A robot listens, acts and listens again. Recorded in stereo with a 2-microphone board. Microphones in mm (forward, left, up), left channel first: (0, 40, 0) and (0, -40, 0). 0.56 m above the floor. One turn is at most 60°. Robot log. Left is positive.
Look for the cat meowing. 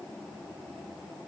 cmd idle
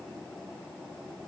cmd idle
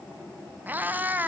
note: The cat meowing: about 20° right or 160° right.
cmd yaw -20
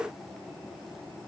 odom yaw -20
cmd idle
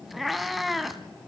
end: Facing the cat meowing, 1 to 2 m away.